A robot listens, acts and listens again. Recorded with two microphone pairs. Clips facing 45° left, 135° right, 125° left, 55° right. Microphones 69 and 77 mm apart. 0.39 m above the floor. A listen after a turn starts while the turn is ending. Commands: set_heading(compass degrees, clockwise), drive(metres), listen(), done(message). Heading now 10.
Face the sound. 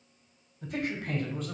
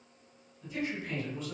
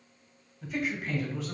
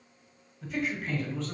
set_heading(330)
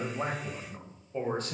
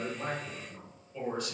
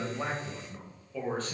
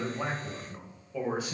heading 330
set_heading(310)
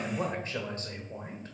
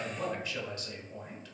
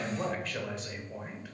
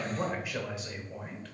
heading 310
set_heading(260)
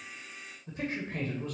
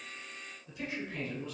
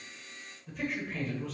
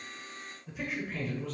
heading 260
set_heading(225)
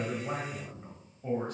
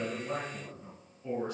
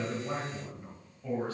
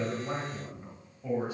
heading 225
set_heading(215)
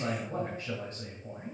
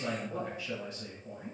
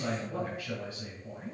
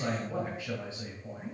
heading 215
done("Found it: a man speaking, straight ahead.")